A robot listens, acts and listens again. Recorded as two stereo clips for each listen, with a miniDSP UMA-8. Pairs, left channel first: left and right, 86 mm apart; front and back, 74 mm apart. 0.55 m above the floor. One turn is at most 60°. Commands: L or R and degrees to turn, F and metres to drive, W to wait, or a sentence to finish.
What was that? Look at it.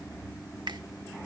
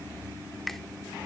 R60
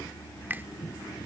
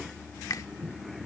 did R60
R30
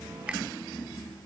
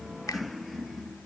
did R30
R15
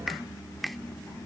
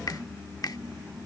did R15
Facing the finger snap.